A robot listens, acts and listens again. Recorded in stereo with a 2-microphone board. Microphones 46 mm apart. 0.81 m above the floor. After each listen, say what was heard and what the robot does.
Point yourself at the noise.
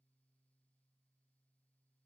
Keep listening.
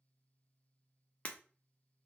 The breaking glass: about 30° left or 150° left. Turn 30° left.
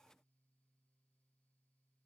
Keep listening.
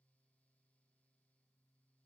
I heard breaking glass, but can't make it out now. It was about straight ahead or 120° left.